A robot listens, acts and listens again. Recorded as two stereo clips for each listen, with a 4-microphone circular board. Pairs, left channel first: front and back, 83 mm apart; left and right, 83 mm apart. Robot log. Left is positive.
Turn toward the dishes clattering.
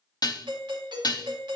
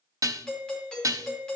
note: The dishes clattering: 40° right.
cmd yaw -40
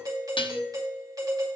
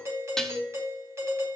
end: Facing the dishes clattering, under 1 m away.